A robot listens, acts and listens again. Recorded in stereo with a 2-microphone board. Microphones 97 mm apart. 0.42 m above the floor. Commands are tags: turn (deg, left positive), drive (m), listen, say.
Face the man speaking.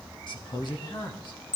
<turn deg="50"/>
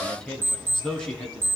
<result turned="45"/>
<say>Facing the man speaking, 2 to 4 m away.</say>